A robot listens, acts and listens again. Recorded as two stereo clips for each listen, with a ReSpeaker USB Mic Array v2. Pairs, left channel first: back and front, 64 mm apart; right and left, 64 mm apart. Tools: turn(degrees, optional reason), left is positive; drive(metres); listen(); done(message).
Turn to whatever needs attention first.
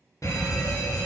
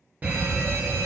turn(degrees=150, reason="The fire alarm: 150° left.")
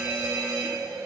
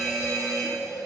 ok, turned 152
done("Facing the fire alarm.")